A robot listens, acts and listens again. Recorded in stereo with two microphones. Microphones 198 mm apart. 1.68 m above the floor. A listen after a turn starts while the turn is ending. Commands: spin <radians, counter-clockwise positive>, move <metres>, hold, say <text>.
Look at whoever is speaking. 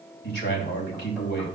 spin 1.05
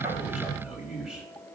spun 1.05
say Facing the man speaking.